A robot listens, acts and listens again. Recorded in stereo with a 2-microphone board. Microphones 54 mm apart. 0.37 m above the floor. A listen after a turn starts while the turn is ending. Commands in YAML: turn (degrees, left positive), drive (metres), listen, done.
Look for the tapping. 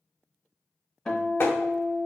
turn: 60
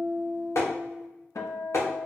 turn: 65
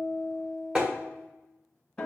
turn: -20
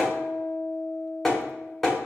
done: "Found it: tapping, straight ahead."